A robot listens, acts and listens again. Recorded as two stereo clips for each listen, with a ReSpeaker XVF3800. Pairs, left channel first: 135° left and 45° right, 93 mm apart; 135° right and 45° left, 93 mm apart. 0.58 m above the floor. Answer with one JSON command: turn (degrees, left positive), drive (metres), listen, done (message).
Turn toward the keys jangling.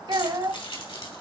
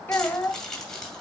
{"turn": 140}
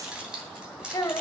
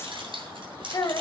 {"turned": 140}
{"turn": 35}
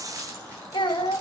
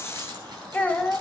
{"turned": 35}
{"listen": true}
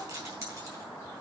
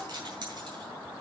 {"done": "Found it: keys jangling, straight ahead."}